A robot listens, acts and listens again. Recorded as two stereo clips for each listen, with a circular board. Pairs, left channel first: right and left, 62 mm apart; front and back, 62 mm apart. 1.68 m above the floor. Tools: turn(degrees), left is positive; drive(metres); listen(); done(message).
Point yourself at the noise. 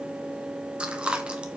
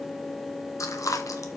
turn(degrees=20)
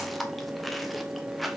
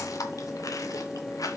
done("Found it: chewing, straight ahead, 1 to 2 m away.")